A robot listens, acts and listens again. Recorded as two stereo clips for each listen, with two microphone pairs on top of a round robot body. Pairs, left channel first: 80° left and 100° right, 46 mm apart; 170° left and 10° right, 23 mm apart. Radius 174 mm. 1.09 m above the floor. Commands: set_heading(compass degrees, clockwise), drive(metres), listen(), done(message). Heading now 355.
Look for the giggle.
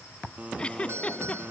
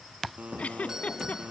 set_heading(200)
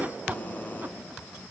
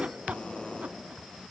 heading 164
set_heading(204)
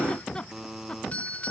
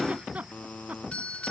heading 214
set_heading(204)
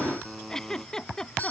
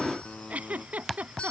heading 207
done("Facing the giggle.")